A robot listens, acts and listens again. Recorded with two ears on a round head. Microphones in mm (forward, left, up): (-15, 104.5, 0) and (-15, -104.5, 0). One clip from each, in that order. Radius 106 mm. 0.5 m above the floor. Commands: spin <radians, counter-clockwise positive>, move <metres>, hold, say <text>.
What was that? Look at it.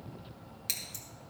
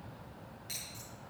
spin 1.13
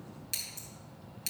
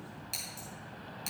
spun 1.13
say Facing the scissors, 2 to 4 m away.